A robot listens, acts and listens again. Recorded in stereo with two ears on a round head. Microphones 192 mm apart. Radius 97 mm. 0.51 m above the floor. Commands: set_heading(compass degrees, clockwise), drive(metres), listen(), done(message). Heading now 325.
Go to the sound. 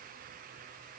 listen()
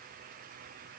listen()
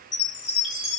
set_heading(290)
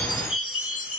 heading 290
set_heading(185)
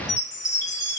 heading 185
set_heading(170)
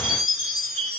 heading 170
drive(1.0)
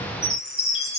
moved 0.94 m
drive(1.0)
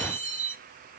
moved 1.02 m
drive(1.0)
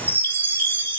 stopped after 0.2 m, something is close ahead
set_heading(180)
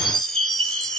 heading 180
done("I am next to the chime.")